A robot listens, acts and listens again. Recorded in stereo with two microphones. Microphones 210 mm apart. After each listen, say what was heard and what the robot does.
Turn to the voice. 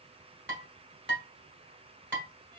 Keep listening.
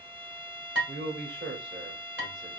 The man speaking: about 55° right or 125° right. Turn 55° right.
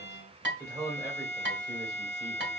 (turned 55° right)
So it is at 20° right. Turn 20° right.
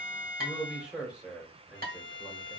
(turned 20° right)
Found it: a man speaking, straight ahead, 1 to 2 m away.